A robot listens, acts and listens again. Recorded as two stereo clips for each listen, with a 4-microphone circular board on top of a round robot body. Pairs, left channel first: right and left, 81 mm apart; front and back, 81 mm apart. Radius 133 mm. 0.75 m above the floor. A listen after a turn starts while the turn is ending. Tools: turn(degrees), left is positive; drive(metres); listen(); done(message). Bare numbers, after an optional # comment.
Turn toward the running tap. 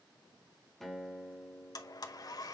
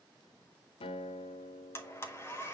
listen()
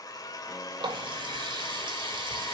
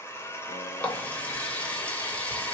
# The running tap: 75° left.
turn(75)
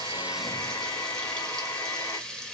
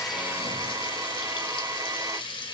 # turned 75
# The running tap is now 10° right.
turn(-10)
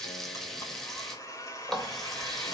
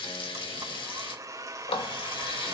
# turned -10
done("Facing the running tap.")